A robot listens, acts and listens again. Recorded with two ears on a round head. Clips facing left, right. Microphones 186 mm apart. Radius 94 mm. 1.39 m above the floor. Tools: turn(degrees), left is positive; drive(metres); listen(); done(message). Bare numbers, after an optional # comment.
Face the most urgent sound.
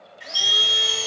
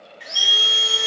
# The alarm: about 55° left or 125° left.
turn(55)
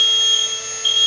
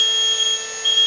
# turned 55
# So it is at 65° left.
turn(65)
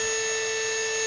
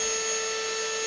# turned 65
listen()
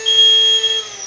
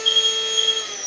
done("Facing the alarm.")